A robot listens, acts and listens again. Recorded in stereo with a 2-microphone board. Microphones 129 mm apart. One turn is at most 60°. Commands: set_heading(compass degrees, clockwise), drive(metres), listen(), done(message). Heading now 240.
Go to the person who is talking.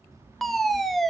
set_heading(270)
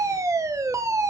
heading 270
listen()
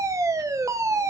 listen()
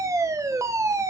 done("I heard a child speaking, but can't make it out now. It was about straight ahead or 120° right. I did not reach it.")